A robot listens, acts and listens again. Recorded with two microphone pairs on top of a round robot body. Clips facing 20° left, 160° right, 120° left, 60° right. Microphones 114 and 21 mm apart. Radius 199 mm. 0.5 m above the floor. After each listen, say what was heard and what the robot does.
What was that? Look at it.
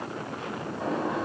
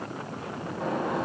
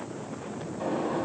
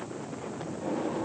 The gunshot: 115° left. Turn 115° left.
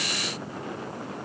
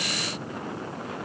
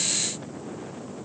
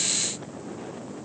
I heard a gunshot from this way, but can't make it out now.